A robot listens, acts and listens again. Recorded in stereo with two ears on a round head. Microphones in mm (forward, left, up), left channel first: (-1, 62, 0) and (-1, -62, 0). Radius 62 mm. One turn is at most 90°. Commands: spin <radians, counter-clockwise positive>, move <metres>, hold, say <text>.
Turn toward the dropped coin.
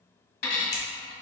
spin 1.31
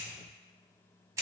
hold
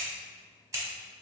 say I heard a dropped coin, but can't make it out now. It was about straight ahead or 30° left.